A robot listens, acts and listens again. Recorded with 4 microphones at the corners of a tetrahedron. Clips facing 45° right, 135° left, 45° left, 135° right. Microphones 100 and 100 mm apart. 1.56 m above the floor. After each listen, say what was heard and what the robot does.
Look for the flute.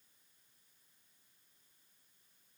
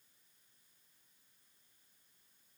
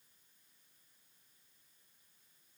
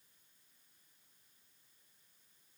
Keep listening.
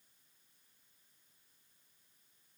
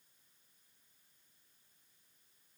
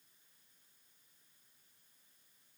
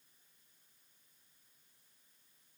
Keep listening.
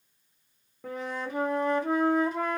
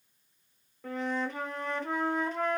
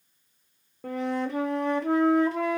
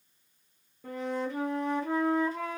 The flute: 35° left. Turn 35° left.
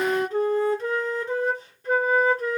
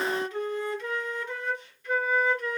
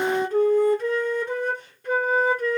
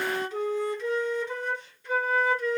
Found it: a flute, straight ahead.